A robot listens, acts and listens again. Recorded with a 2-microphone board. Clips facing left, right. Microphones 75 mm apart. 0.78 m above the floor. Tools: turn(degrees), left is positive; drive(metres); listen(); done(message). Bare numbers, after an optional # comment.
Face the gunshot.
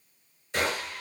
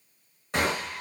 # The gunshot: about 65° right or 115° right.
turn(-65)
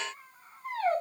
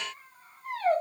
listen()
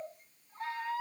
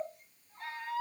done("I heard a gunshot, but can't make it out now. It was about straight ahead or 50° right.")